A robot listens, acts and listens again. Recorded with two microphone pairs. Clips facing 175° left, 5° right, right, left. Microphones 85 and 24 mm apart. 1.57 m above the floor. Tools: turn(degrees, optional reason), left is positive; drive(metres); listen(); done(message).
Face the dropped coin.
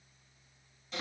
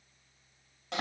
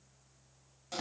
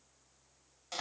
listen()
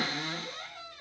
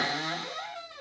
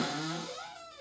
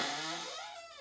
listen()
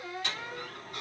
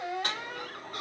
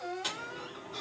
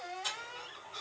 turn(degrees=-45, reason="The dropped coin: 45° right.")
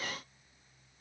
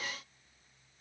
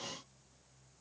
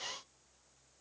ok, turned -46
done("Facing where the dropped coin came from. I can't hear it now.")